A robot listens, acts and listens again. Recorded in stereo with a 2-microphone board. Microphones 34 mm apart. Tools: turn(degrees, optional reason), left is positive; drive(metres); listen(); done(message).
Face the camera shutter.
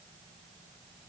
listen()
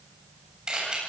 turn(degrees=-25, reason="The camera shutter: about 25° right or 155° right.")
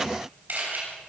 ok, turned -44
turn(degrees=-115, reason="So it is at 115° right.")
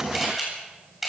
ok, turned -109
done("Facing the camera shutter, over 4 m away.")